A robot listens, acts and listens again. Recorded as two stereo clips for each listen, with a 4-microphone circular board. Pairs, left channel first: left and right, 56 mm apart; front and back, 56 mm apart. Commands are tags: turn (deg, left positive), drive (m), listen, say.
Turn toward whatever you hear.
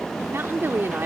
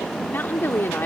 <turn deg="-45"/>
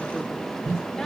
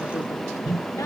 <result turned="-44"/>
<listen/>
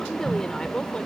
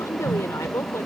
<turn deg="15"/>
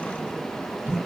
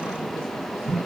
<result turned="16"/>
<listen/>
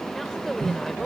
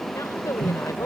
<say>Facing the woman speaking.</say>